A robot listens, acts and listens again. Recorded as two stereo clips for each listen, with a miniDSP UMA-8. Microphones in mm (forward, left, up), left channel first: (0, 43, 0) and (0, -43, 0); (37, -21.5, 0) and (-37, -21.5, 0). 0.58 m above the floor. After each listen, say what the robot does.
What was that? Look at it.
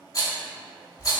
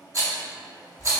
Turn 135° left.
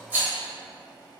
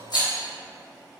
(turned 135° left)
Turn 20° right.
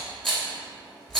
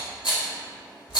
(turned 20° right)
Facing the rattle.